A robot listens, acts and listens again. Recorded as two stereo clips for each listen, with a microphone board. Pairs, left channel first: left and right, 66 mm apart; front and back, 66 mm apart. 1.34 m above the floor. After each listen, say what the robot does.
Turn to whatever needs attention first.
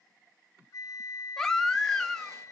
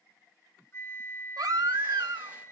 Turn 175° left.
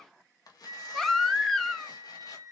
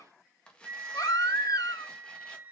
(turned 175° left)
Found it: a baby crying, straight ahead, 1 to 2 m away.